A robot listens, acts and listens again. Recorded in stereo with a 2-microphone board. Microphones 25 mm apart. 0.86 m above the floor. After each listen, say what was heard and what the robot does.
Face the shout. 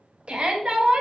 The shout: about 50° right or 130° right. Turn 50° right.
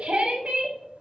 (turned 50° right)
So it is at 70° right. Turn 70° right.
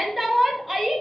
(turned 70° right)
The shout is now 10° right. Turn 10° right.
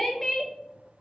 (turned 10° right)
Facing the shout.